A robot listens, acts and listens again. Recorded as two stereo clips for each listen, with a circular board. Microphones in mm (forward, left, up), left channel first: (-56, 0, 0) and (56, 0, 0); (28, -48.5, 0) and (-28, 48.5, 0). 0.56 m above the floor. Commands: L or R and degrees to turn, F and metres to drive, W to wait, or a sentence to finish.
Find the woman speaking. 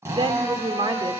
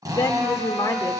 R10
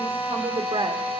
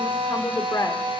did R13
Found it: a woman speaking, straight ahead.